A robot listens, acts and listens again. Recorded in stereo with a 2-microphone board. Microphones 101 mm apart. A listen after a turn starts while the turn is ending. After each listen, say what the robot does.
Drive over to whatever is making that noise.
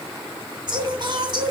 Turn 45° right.
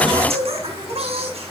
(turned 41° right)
Turn 95° right.
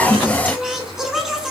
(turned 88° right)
Drive 1.0 m forward.
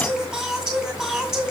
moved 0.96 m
Drive 1.0 m forward.
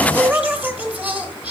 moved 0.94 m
Turn 15° right.
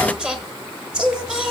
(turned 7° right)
Turn 10° right.
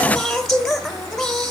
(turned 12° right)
Drive 1.0 m forward.
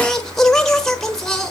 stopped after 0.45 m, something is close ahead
I am next to the singing.